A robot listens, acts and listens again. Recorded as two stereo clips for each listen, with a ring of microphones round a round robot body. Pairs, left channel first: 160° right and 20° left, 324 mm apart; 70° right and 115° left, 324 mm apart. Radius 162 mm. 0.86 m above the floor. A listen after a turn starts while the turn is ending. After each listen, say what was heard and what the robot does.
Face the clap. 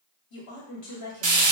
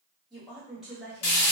Keep listening.
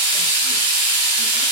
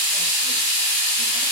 Keep listening.
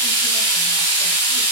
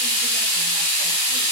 I can't make out a clap, only a woman speaking and frying.